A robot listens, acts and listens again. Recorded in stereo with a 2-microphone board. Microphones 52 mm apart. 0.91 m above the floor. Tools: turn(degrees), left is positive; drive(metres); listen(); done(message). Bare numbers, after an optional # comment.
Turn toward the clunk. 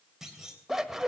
turn(-30)
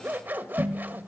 listen()
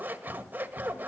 done("I heard a clunk, but can't make it out now. It was about 20° left or 140° right.")